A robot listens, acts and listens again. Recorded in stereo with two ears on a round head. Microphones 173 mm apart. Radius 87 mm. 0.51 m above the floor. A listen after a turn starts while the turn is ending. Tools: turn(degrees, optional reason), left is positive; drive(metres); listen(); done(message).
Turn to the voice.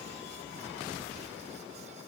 listen()
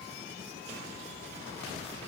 listen()
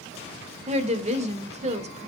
turn(degrees=-35, reason="The woman speaking: about 35° right or 145° right.")
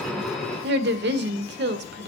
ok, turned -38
turn(degrees=-100, reason="So it is at 100° right.")
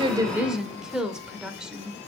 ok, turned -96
done("Found it: a woman speaking, straight ahead, 1 to 2 m away.")